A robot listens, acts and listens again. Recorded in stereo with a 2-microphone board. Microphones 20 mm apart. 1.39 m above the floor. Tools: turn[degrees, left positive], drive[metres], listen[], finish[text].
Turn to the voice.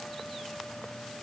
Action: listen[]
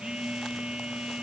Action: listen[]
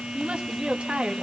Action: turn[-90]
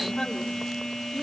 Action: listen[]
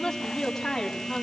Thought: The woman speaking is now 25° left.
Action: turn[25]
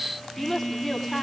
Action: finish[Facing the woman speaking.]